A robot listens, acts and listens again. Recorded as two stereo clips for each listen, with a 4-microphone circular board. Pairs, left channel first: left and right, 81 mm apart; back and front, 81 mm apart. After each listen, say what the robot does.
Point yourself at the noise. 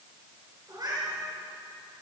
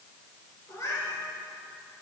Turn 130° right.
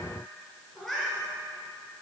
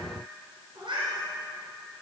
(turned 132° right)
Found it: a cat meowing, straight ahead.